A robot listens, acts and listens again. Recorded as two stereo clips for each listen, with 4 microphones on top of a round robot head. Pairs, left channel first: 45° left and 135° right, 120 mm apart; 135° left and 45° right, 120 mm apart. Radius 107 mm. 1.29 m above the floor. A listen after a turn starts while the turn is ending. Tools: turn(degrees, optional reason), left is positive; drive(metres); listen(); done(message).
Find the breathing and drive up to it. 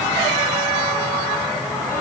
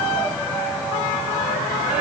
listen()
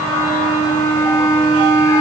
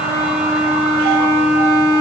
listen()
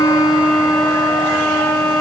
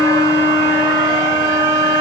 done("I can't make out breathing to turn to.")